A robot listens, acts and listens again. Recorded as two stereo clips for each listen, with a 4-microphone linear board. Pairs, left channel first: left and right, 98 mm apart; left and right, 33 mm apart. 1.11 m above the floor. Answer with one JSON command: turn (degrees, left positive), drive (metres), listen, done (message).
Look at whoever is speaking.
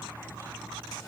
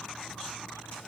{"listen": true}
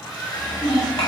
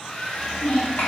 {"turn": 70}
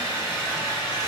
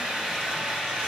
{"listen": true}
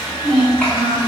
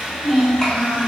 {"turn": 20}
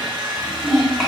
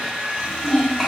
{"done": "Facing the child speaking."}